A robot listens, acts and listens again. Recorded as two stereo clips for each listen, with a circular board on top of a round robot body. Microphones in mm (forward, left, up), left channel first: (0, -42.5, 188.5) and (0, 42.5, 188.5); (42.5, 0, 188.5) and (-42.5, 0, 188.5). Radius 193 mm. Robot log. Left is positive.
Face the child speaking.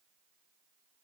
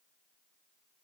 cmd idle
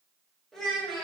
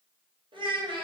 note: The child speaking: straight behind.
cmd yaw +180
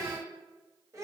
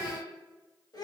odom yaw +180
note: The child speaking is now 40° left.
cmd yaw +40
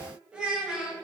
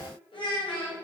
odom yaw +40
note: The child speaking is now 10° left.
cmd yaw +10
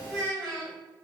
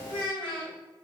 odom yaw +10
end: Found it: a child speaking, straight ahead.